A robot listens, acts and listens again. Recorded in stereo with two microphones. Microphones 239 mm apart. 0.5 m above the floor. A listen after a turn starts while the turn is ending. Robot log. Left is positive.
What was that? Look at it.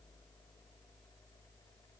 cmd idle
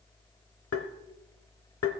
note: The tapping: about 70° left or 110° left.
cmd yaw +70
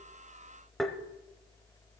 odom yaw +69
end: Found it: tapping, straight ahead.